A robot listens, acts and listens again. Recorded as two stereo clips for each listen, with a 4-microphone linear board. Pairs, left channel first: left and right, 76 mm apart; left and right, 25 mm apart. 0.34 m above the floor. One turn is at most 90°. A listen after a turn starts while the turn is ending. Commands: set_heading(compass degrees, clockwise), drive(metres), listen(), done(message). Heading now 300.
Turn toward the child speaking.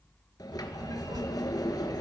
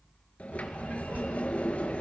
set_heading(5)
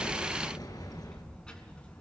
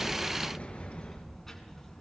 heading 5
set_heading(350)
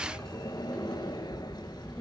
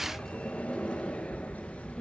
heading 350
set_heading(335)
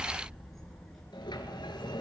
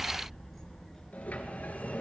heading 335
done("Found it: a child speaking, straight ahead.")